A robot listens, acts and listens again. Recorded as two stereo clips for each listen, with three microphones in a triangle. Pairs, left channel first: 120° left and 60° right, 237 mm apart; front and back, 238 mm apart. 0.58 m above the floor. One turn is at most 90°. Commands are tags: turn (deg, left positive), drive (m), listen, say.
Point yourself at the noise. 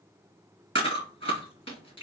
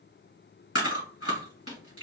<turn deg="-25"/>
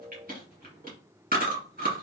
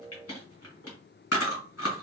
<turn deg="-10"/>
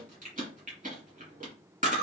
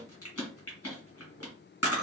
<say>Found it: chewing, straight ahead, 1 to 2 m away.</say>